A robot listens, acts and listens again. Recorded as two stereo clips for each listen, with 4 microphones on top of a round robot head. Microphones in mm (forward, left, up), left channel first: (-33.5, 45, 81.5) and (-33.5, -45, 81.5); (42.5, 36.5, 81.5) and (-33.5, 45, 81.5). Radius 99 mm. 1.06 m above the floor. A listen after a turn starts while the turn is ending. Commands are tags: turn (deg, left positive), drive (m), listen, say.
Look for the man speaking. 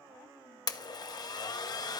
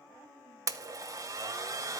<listen/>
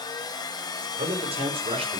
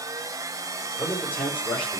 <turn deg="-80"/>
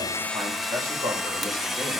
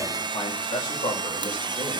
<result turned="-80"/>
<turn deg="-25"/>
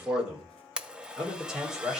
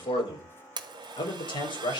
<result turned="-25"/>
<say>Facing the man speaking.</say>